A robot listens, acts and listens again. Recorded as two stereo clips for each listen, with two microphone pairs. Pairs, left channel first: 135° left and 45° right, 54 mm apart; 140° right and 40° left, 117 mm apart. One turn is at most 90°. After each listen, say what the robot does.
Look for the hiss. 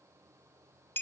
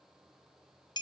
Keep listening.
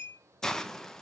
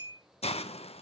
Turn 90° right.
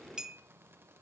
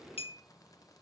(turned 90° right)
Turn 60° right.
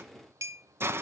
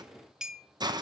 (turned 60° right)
Turn 10° right.
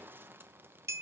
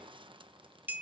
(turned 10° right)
Keep listening.
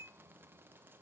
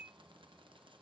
Keep listening.
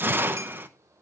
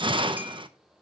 Facing the hiss.